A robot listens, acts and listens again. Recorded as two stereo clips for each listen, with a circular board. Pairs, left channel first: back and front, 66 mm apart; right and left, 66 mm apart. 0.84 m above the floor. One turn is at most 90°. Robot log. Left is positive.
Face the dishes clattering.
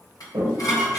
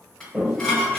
note: The dishes clattering: 170° right.
cmd yaw -90
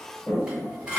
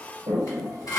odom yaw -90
note: The dishes clattering is now 75° right.
cmd yaw -75
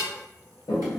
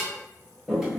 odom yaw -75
cmd idle
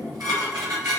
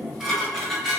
end: Found it: dishes clattering, straight ahead, 1 to 2 m away.